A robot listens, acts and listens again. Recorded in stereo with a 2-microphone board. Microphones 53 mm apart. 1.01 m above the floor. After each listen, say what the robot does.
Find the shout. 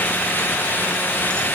Keep listening.
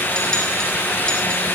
Keep listening.
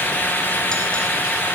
I can't make out a shout to turn to.